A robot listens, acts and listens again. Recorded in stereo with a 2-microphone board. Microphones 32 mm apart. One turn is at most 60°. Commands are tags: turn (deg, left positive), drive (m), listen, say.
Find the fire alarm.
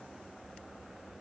<listen/>
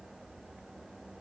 <listen/>
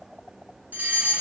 <turn deg="-55"/>
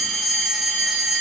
<turn deg="-15"/>
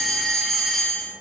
<say>Facing the fire alarm.</say>